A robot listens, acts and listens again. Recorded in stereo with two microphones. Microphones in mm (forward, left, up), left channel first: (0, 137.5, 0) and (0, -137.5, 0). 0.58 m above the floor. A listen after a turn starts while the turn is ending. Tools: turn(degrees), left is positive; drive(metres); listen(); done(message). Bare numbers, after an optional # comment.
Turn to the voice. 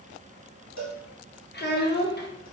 # The child speaking: about 35° left or 145° left.
turn(35)
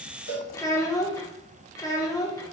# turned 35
# So it is at 15° left.
turn(15)
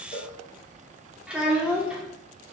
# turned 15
done("Facing the child speaking, under 1 m away.")